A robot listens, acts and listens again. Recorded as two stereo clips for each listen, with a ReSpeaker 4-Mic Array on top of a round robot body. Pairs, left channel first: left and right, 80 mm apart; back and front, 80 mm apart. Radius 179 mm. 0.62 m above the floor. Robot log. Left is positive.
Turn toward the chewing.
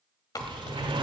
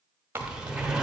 note: The chewing: 65° left.
cmd yaw +65
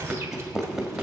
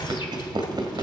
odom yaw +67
end: Facing the chewing, 1 to 2 m away.